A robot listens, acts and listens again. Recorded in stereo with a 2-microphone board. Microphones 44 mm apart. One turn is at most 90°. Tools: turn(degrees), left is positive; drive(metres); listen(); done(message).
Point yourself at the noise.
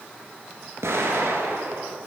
turn(degrees=-75)
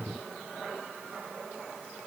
listen()
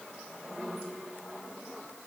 done("I heard an explosion, but can't make it out now. It was about straight ahead or 30° right.")